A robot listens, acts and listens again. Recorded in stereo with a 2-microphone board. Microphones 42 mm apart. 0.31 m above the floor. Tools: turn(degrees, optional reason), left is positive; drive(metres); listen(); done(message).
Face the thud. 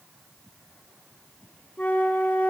listen()
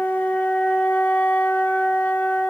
listen()
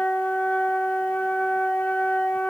done("I can't make out a thud, only a flute.")